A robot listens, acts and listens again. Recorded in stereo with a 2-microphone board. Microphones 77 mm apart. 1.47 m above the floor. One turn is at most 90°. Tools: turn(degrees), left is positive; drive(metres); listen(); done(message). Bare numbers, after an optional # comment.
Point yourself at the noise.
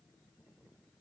listen()
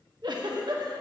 # The giggle: about 70° right or 110° right.
turn(-70)
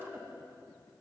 # So it is at 30° right.
turn(-30)
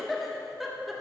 done("Facing the giggle, 1 to 2 m away.")